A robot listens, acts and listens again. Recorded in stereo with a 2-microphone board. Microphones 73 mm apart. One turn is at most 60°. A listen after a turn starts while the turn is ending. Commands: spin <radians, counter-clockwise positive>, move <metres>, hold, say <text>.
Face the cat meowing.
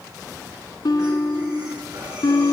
hold
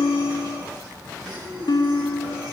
hold
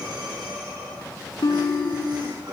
say I can't make out a cat meowing to turn to.